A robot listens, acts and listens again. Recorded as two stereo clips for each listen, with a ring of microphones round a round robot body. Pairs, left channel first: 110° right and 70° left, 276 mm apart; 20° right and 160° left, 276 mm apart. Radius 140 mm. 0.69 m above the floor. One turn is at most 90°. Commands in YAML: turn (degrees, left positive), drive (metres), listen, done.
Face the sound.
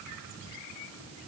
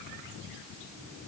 listen: true
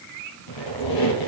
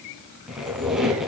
turn: -90
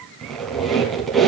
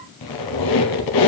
turn: -25
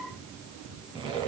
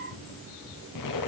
done: "Facing the squeak."